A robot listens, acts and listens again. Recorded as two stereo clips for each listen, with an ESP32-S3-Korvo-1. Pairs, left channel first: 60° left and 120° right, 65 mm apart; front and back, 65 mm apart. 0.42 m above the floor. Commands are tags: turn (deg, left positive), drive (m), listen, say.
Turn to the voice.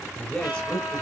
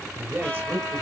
<turn deg="125"/>
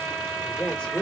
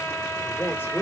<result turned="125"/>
<say>Found it: a man speaking, straight ahead, 1 to 2 m away.</say>